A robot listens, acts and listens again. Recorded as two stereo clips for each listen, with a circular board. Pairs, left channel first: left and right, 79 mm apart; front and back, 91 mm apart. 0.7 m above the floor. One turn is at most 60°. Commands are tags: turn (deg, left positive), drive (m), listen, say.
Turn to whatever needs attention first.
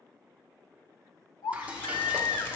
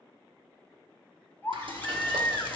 <turn deg="60"/>
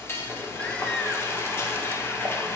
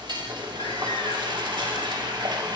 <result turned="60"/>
<listen/>
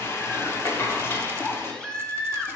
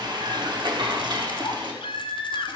<turn deg="10"/>
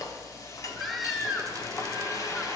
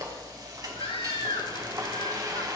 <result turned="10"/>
<say>Found it: a baby crying, straight ahead.</say>